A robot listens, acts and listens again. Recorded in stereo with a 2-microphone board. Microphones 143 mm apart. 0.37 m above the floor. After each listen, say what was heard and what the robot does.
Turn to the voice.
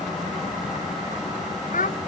The child speaking: about 70° left or 110° left. Turn 70° left.
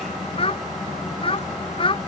So it is at 40° left. Turn 40° left.
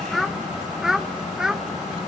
Found it: a child speaking, straight ahead.